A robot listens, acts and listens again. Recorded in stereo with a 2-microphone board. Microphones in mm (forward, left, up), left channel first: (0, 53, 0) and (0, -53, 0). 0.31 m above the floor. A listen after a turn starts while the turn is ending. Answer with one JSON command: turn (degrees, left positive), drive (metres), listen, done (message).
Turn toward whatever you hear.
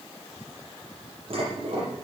{"turn": -55}
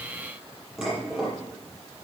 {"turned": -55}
{"done": "Facing the dishes clattering."}